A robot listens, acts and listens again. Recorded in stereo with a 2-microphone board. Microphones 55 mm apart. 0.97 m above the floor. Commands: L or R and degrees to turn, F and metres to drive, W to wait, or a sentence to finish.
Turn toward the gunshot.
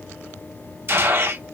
R45
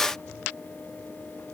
W
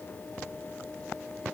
I heard a gunshot, but can't make it out now. It was about straight ahead or 90° right.